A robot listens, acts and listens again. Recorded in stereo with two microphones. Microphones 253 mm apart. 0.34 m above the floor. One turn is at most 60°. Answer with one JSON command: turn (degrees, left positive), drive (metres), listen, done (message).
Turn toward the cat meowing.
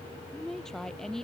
{"listen": true}
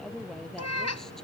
{"turn": 60}
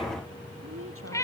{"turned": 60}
{"turn": 10}
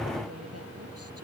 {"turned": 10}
{"listen": true}
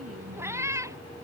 {"turn": -10}
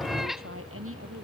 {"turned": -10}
{"done": "Found it: a cat meowing, straight ahead."}